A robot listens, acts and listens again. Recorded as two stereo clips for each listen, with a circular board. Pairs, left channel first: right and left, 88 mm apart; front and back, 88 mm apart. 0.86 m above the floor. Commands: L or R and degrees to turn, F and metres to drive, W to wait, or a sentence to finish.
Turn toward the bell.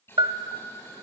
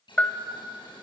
L75
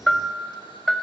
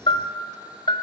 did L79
Found it: a bell, straight ahead, 1 to 2 m away.